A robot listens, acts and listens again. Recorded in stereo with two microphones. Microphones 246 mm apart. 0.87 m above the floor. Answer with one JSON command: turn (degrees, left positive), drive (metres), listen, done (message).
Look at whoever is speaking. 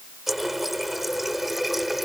{"listen": true}
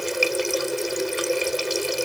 {"listen": true}
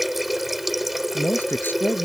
{"turn": 30}
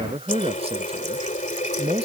{"turn": -25}
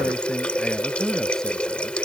{"listen": true}
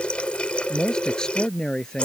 {"done": "Found it: a man speaking, straight ahead."}